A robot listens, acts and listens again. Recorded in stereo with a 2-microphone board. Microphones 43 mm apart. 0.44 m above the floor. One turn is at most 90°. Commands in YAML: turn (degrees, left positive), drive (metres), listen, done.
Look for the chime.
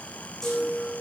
turn: 30
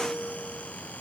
turn: -15
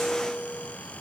done: "Facing the chime, over 4 m away."